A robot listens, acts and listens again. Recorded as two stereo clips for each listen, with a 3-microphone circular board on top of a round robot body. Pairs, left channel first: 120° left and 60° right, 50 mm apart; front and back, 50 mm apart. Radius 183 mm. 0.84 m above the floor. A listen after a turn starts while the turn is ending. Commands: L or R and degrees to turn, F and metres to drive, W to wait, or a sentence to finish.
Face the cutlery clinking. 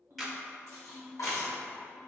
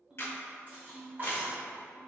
L130
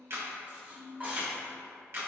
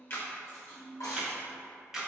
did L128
Found it: cutlery clinking, straight ahead.